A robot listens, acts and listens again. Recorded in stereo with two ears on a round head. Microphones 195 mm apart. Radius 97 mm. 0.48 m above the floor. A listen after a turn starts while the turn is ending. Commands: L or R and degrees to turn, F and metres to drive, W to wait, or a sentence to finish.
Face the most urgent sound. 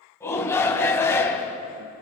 L30
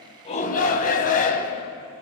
L140
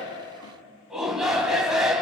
Found it: a shout, straight ahead.